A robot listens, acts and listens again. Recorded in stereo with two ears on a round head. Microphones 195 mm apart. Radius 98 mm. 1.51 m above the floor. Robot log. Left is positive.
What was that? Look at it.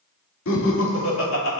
note: The laughter: about 75° left or 105° left.
cmd yaw +75
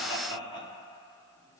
note: So it is at 20° left.
cmd yaw +20
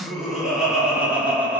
note: The laughter is now 10° right.
cmd yaw -10
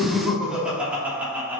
note: The laughter is now 10° right.
cmd yaw -10
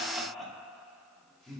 end: Facing the laughter, 2 to 4 m away.